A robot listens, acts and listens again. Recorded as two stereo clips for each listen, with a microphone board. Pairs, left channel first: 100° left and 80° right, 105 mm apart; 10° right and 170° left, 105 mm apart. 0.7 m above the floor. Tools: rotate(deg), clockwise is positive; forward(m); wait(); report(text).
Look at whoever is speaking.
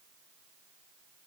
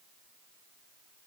wait()
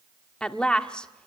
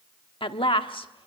rotate(-20)
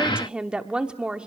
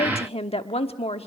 report("Facing the woman speaking, 1 to 2 m away.")